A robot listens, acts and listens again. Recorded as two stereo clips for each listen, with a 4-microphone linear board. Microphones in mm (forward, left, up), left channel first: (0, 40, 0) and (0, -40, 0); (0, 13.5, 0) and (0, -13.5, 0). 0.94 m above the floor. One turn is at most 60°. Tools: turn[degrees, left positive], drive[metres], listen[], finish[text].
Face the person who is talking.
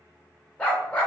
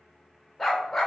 Action: listen[]
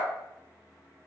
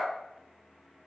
Action: listen[]
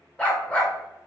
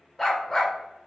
Action: finish[I can't make out anyone speaking, only a dog barking.]